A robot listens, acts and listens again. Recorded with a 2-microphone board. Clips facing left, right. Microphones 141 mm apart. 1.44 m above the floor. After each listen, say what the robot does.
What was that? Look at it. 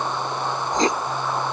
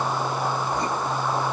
Turn 90° left.
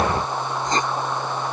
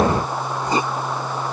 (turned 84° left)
Turn 10° right.
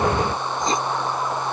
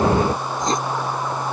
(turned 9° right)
Found it: writing, straight ahead.